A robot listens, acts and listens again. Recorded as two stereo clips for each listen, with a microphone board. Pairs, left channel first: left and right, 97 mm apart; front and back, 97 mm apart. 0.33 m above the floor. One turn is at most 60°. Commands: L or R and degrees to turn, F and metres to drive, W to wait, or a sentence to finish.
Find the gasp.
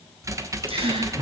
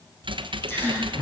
R60
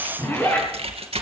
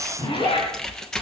R10
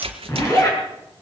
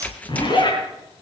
I heard a gasp from this way, but can't make it out now.